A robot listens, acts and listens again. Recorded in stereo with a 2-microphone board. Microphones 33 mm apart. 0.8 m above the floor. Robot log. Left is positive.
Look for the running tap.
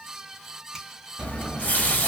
note: The running tap: about 55° left or 125° left.
cmd yaw +55
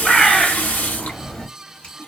note: So it is at 65° left.
cmd yaw +65
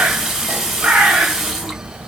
note: The running tap is now 10° right.
cmd yaw -10
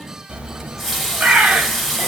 end: Found it: a running tap, straight ahead.